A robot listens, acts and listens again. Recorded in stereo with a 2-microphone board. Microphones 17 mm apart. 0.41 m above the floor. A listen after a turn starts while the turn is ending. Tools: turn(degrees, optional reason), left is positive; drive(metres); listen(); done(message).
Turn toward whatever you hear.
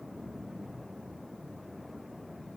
listen()
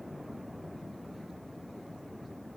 listen()
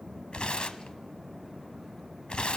turn(degrees=90)
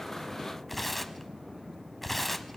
done("Facing the tearing paper, under 1 m away.")